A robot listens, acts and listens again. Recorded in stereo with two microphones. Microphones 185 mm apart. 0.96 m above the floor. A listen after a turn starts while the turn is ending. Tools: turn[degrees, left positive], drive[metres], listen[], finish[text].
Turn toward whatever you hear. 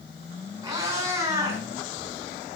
Action: turn[-30]
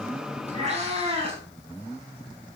Thought: So it is at 150° right.
Action: turn[-150]
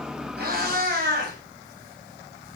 Thought: The cat meowing is now 50° right.
Action: turn[-50]
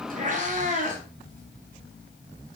Thought: The cat meowing is now 40° right.
Action: turn[-40]
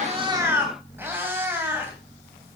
Thought: The cat meowing is now 10° right.
Action: turn[-10]
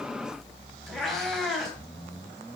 Action: finish[Found it: a cat meowing, straight ahead, 2 to 4 m away.]